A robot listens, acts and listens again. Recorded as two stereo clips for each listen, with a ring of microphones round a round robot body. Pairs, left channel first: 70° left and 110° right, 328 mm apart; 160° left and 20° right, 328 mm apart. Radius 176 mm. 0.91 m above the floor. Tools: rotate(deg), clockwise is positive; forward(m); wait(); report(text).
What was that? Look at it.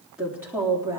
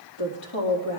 rotate(-170)
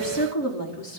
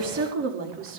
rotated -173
rotate(-30)
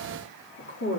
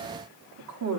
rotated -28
rotate(-15)
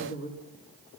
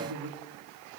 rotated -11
rotate(-10)
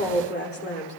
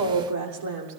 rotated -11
rotate(-10)
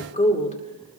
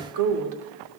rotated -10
report("Found it: a woman speaking, straight ahead.")